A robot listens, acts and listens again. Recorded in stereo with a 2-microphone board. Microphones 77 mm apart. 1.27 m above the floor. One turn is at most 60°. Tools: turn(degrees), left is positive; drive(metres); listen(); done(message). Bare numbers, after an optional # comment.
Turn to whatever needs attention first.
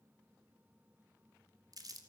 listen()
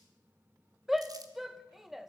turn(-30)
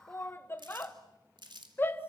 # So it is at 30° left.
turn(30)
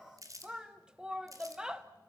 # The shout is now 10° right.
turn(-10)
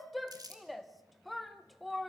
done("Facing the shout.")